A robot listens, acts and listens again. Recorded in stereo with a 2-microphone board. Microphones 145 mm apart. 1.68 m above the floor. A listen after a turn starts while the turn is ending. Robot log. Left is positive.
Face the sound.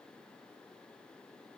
cmd idle
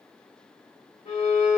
note: The violin: about 55° left or 125° left.
cmd yaw +55
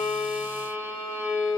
note: So it is at 25° left.
cmd yaw +25
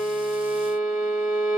note: The violin is now 10° right.
cmd yaw -10
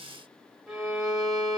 end: Found it: a violin, straight ahead.